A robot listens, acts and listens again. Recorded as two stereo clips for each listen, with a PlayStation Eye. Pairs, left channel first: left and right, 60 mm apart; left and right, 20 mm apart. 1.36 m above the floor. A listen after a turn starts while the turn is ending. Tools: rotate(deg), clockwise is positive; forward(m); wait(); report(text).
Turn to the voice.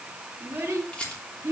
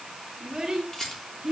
rotate(35)
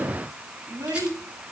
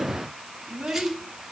rotate(110)
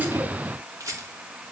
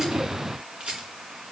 wait()
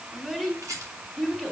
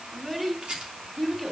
rotate(15)
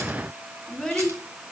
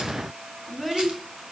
report("Found it: a child speaking, straight ahead, 2 to 4 m away.")